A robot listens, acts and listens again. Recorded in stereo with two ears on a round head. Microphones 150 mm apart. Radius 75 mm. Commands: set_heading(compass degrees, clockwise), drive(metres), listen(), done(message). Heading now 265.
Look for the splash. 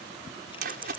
set_heading(325)
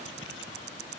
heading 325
listen()
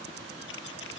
done("I heard a splash, but can't make it out now. It was about straight ahead or 60° right.")